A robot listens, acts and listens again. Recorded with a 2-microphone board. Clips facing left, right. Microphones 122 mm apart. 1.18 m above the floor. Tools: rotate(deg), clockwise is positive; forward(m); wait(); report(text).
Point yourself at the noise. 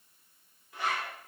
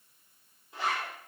rotate(25)
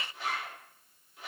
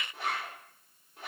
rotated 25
rotate(130)
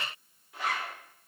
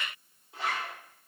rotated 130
rotate(25)
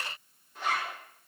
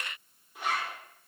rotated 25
rotate(10)
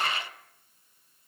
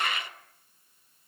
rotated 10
wait()
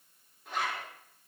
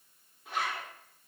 report("Facing the zipper.")